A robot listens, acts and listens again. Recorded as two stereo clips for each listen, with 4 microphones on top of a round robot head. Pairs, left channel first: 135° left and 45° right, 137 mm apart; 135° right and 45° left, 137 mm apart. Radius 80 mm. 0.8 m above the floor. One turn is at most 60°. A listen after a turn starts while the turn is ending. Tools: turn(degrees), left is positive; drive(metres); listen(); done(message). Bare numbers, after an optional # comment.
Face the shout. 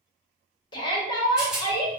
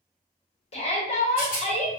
# The shout: 170° right.
turn(-60)
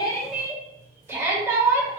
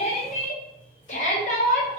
# The shout is now 115° right.
turn(-60)
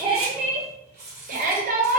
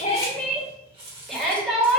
# The shout is now 45° right.
turn(-45)
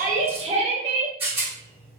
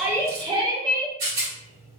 # The shout is now 10° right.
turn(-10)
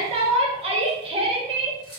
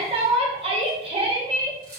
done("Facing the shout, 1 to 2 m away.")